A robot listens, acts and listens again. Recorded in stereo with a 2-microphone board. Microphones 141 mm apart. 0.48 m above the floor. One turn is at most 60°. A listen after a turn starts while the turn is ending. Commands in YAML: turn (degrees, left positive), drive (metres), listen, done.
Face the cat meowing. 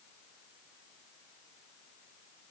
listen: true
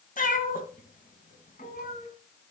turn: 60
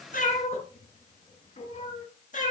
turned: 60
turn: 60
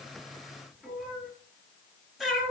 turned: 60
done: "Found it: a cat meowing, straight ahead."